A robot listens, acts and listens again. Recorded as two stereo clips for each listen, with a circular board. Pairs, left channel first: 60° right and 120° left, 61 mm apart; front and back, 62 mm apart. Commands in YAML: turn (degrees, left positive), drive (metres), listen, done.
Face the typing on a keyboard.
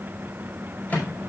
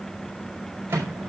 listen: true
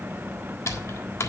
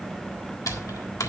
turn: -25
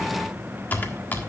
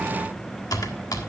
done: "Facing the typing on a keyboard, 1 to 2 m away."